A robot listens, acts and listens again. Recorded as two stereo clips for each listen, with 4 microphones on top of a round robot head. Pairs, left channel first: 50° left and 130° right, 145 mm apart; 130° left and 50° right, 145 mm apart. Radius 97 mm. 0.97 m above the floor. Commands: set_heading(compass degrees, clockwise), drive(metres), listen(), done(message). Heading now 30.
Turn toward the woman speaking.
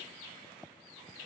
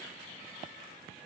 listen()
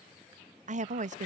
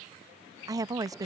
set_heading(140)
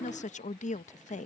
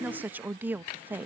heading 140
set_heading(115)
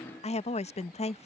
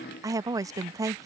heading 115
set_heading(100)
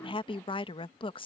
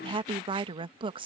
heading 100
done("Facing the woman speaking.")